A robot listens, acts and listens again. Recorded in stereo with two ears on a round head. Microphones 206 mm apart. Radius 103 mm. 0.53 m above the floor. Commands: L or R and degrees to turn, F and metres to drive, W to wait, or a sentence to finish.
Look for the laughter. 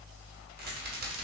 W
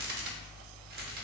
W
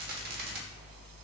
I can't make out laughter, only a rattle.